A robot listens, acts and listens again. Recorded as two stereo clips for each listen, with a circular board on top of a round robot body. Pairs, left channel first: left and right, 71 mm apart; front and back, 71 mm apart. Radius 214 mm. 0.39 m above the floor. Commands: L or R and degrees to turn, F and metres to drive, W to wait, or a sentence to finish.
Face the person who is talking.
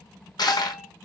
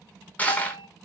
W
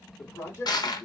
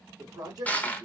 L145
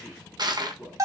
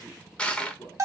Found it: a man speaking, straight ahead, 1 to 2 m away.